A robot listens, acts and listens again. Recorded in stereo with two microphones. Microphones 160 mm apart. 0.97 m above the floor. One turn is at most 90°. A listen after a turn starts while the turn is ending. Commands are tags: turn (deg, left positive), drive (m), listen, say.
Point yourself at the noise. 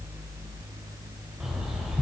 <turn deg="-30"/>
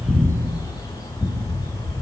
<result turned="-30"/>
<turn deg="25"/>
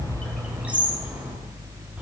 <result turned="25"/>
<turn deg="-10"/>
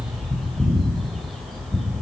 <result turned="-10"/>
<say>Found it: a bird, straight ahead.</say>